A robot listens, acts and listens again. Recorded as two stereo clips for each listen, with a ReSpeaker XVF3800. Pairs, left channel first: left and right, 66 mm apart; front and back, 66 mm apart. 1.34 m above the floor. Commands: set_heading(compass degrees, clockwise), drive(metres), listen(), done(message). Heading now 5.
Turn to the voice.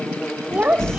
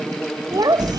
set_heading(170)
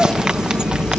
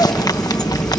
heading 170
listen()
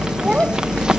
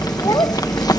set_heading(180)
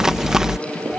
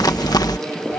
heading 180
set_heading(195)
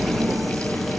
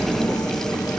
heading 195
listen()
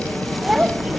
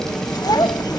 set_heading(205)
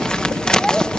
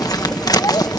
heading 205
listen()
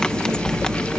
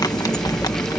listen()
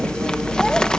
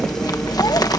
done("Facing where the child speaking came from. I can't hear it now.")